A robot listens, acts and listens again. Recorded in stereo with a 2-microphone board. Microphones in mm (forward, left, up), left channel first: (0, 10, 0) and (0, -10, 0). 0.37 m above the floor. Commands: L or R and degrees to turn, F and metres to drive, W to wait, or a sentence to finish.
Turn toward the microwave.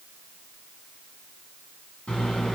L75
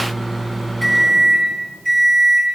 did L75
L10
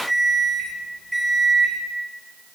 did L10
Found it: a microwave, straight ahead.